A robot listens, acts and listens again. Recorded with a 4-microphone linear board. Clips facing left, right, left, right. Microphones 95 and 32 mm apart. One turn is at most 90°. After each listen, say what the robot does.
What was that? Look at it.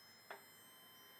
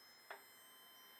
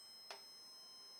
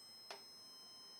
Keep listening.
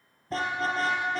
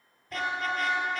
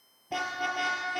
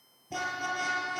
Turn 30° left.
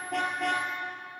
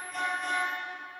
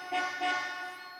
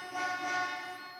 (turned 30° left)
Turn 90° left.
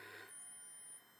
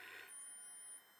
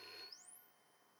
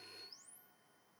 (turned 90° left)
Turn 30° left.
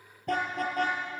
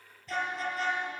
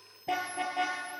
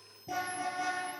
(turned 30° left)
Turn 55° left.
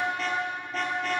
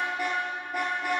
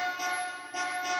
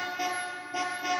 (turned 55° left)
Turn 10° right.
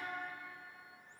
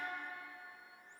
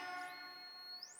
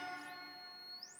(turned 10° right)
Keep listening.
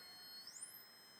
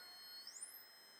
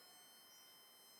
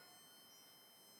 Keep listening.
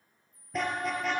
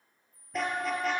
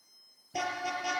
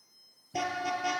Found it: a car horn, straight ahead, over 4 m away.